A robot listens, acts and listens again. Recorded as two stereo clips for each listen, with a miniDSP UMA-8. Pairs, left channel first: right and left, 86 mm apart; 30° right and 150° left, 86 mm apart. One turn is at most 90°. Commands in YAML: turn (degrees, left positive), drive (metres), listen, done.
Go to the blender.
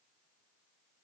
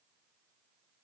listen: true
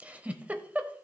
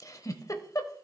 listen: true
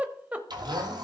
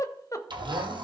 turn: 90
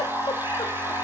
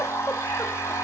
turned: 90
turn: 25
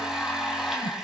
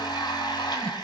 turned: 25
drive: 1.0
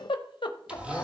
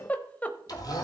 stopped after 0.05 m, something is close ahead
turn: 10
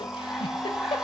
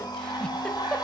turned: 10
done: "Blocked. The blender is further on, straight ahead."